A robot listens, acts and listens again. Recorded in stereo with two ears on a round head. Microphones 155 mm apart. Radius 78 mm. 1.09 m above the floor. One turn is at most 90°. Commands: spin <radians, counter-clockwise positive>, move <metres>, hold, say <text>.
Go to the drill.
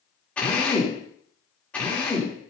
spin 0.52
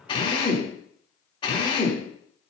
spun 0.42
spin 1.57
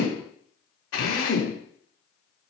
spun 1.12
spin 1.48
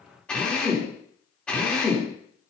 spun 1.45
move 1.0
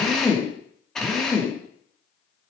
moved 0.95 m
move 1.0
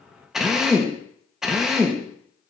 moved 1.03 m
move 1.0
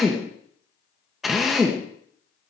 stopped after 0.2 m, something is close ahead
say Arrived at the drill, straight ahead.